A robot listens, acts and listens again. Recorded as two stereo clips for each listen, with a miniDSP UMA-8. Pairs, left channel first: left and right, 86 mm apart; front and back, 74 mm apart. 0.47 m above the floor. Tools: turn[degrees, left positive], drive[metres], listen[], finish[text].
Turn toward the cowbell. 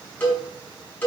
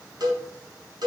Thought: The cowbell: 160° left.
Action: turn[160]
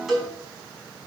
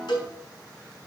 Action: finish[Facing the cowbell, over 4 m away.]